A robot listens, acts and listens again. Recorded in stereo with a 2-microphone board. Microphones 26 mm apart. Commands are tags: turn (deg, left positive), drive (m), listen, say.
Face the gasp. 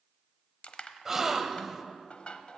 <turn deg="-15"/>
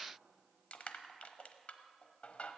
<listen/>
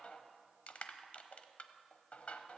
<say>I heard a gasp, but can't make it out now. It was about straight ahead or 150° right.</say>